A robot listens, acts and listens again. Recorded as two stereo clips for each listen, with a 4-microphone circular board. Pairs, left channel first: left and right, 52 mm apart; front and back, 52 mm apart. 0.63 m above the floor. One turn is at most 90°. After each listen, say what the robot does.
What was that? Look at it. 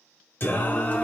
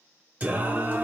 Turn 90° left.
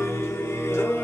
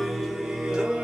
Turn 90° left.
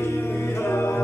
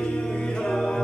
Turn 80° left.
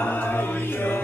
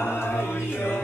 Turn 40° left.
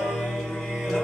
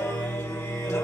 Found it: singing, straight ahead.